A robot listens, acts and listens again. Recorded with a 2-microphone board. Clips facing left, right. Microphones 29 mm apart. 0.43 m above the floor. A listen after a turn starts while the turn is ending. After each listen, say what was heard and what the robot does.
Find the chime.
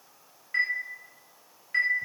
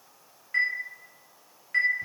Turn 30° left.
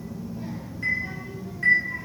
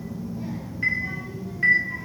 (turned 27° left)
So it is at 20° right. Turn 20° right.
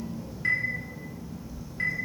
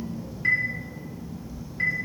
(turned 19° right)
Facing the chime, under 1 m away.